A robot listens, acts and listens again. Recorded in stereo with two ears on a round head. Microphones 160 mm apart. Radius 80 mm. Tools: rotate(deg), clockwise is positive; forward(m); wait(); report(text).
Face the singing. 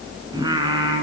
rotate(20)
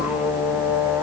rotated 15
rotate(10)
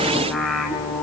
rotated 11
report("Found it: singing, straight ahead, 2 to 4 m away.")